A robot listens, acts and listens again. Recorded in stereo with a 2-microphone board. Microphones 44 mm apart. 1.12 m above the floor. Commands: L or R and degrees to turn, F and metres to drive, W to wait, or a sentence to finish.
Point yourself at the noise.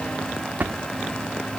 R40
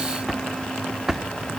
Found it: a drawer, straight ahead.